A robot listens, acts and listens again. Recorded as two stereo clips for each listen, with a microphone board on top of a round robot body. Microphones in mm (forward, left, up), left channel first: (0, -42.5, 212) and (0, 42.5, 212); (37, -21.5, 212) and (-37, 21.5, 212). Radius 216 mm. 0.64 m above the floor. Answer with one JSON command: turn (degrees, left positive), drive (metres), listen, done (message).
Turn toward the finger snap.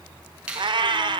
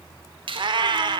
{"turn": 165}
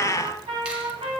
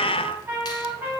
{"listen": true}
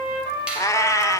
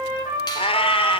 {"listen": true}
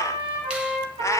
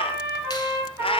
{"done": "I heard a finger snap from this way, but can't make it out now."}